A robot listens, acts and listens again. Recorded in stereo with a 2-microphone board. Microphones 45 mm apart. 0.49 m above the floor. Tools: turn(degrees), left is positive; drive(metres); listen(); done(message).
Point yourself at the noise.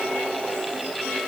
listen()
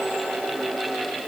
listen()
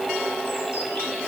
done("I can't make out anything.")